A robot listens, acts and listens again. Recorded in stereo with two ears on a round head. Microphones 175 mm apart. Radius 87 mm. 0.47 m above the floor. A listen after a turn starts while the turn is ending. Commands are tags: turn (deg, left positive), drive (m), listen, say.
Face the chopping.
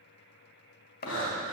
<turn deg="50"/>
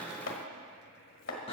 <turn deg="75"/>
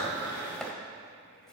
<say>Facing the chopping.</say>